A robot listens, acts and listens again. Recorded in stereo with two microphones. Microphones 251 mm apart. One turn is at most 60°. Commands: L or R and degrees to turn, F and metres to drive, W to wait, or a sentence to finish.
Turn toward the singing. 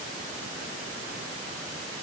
W
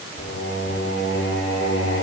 L60
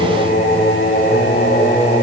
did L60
L50
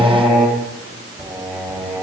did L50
Facing the singing, over 4 m away.